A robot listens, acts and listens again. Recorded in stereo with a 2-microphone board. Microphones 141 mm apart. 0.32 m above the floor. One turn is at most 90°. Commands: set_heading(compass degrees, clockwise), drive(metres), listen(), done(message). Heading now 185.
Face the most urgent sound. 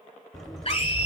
set_heading(140)
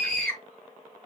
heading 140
set_heading(130)
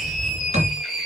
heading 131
done("Facing the scream.")